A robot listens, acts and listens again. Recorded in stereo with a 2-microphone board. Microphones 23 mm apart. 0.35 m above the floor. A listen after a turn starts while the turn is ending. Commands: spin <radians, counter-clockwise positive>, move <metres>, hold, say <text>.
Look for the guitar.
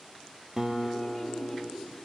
spin -0.35
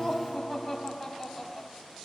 spin -2.44
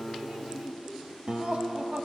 spin -0.70
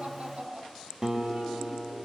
spin -0.44
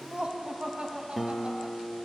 spin -0.17
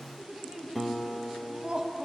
say Found it: a guitar, straight ahead.